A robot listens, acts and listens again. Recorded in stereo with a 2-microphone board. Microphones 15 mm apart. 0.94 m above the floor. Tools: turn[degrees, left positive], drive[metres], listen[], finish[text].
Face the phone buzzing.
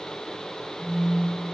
Thought: The phone buzzing: about 65° left or 115° left.
Action: turn[65]
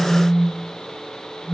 Thought: So it is at 25° left.
Action: turn[25]
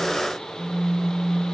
Action: finish[Facing the phone buzzing, 1 to 2 m away.]